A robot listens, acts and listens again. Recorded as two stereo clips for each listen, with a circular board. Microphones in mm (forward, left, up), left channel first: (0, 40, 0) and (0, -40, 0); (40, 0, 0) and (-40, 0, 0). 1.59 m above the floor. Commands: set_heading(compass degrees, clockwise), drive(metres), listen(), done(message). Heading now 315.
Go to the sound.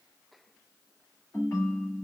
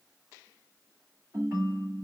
set_heading(175)
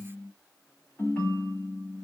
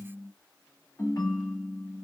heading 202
set_heading(177)
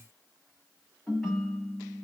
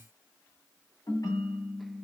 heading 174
drive(1.0)
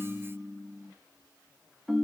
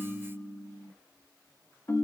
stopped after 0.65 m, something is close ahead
done("Arrived at the ringtone, straight ahead.")